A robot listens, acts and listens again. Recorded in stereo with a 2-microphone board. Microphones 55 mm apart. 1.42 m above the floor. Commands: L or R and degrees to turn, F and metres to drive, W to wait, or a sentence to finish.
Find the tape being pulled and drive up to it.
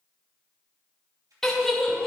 R90
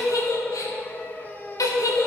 W
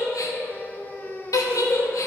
W
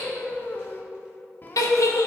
I heard tape being pulled from this way, but can't make it out now. I did not reach it.